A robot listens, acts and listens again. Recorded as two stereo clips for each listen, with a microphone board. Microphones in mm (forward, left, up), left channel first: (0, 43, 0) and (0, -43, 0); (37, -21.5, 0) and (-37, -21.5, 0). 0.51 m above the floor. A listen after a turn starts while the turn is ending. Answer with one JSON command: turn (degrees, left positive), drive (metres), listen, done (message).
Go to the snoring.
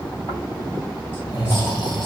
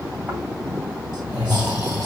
{"turn": 120}
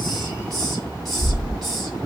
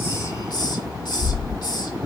{"turn": -35}
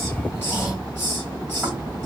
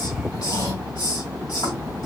{"turn": -10}
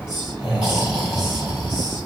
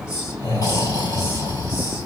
{"drive": 1.0}
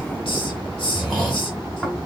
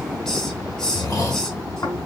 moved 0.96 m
{"drive": 1.0}
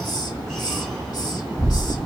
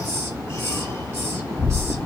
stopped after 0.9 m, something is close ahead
{"turn": 10}
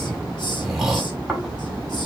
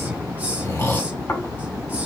{"done": "I am next to the snoring."}